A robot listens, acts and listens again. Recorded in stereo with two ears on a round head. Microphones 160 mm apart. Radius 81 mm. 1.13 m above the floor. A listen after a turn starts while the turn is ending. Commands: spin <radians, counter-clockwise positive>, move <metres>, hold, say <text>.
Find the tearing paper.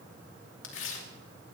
spin 1.57
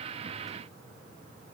hold
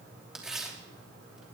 say Facing the tearing paper.